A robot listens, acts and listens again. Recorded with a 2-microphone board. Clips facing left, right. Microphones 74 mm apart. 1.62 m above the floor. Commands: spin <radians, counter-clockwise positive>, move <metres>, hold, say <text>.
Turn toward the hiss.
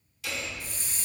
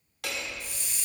spin 0.70
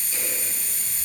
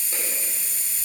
spin 1.57
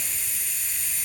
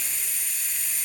say Facing the hiss.